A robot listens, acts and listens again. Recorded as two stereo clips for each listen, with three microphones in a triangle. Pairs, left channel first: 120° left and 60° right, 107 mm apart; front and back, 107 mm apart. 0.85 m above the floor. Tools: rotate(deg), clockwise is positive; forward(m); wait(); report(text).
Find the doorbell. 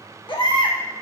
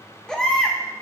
wait()
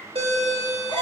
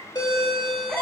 rotate(45)
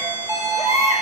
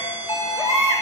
report("Found it: a doorbell, straight ahead, 1 to 2 m away.")